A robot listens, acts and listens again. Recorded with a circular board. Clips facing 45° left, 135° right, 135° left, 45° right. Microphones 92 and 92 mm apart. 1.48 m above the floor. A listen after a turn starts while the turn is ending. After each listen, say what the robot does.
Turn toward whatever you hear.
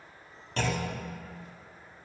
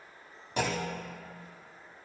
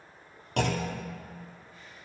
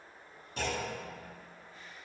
Turn 150° left.
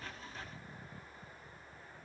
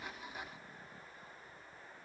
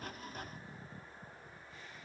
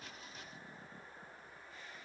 Facing where the clunk came from. I can't hear it now.